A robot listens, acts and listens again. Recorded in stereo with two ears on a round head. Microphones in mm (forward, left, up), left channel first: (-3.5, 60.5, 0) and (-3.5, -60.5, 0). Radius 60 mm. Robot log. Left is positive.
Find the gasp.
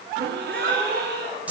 cmd yaw -90
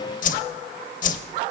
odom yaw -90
end: Facing where the gasp came from. I can't hear it now.